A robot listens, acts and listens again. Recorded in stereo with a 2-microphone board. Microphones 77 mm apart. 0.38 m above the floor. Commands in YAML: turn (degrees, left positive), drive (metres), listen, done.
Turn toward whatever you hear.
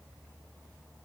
listen: true
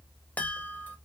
turn: 20
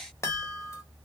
turn: 135
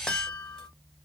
turn: 10
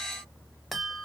done: "Facing the chime."